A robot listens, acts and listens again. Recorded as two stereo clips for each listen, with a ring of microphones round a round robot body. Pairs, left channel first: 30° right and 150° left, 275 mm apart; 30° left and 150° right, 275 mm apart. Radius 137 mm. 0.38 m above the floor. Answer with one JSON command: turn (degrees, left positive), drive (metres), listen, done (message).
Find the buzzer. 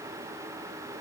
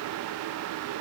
{"listen": true}
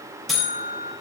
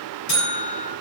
{"turn": 60}
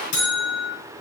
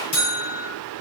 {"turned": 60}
{"done": "Facing the buzzer."}